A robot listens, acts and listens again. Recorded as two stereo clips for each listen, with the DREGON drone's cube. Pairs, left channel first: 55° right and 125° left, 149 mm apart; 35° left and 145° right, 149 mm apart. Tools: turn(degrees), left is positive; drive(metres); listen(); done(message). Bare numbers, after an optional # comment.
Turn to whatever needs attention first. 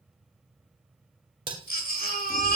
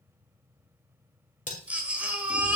# The baby crying: 65° right.
turn(-65)
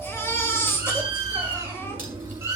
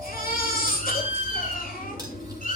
# The baby crying is now 20° left.
turn(20)
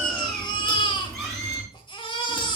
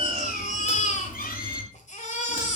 done("Facing the baby crying.")